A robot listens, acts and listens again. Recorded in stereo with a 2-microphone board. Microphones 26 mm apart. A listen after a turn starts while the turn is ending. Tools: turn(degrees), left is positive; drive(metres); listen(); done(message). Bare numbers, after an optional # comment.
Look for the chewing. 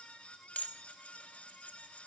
listen()
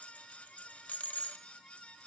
listen()
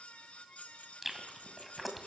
turn(-30)
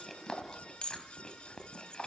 # So it is at 25° left.
turn(25)
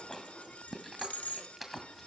# The chewing is now 10° right.
turn(-10)
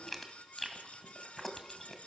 done("Facing the chewing.")